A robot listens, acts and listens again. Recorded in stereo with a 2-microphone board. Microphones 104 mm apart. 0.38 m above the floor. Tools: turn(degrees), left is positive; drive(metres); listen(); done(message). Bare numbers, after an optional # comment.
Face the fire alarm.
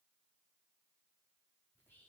listen()
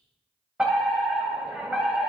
turn(-30)
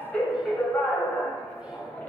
# So it is at 20° left.
turn(20)
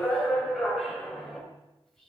done("Facing the fire alarm, 2 to 4 m away.")